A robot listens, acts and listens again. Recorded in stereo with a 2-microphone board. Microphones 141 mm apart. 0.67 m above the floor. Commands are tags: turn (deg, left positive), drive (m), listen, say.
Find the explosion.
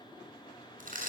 <listen/>
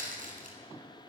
<listen/>
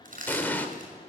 <turn deg="30"/>
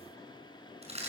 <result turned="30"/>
<listen/>
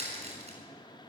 <say>I heard an explosion, but can't make it out now. It was about 20° right or 140° left.</say>